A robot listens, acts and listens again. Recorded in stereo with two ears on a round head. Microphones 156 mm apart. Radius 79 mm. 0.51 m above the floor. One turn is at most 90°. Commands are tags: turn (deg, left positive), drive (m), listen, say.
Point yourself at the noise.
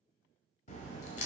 <turn deg="40"/>
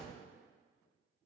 <say>Found it: a crack, straight ahead, 1 to 2 m away.</say>